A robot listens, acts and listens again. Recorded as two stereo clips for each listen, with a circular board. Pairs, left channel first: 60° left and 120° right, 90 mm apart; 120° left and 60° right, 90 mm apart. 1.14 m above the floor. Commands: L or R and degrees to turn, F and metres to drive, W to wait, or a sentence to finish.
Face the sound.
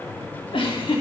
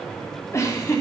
L65
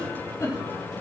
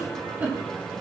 L10
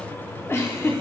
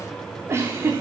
Facing the giggle.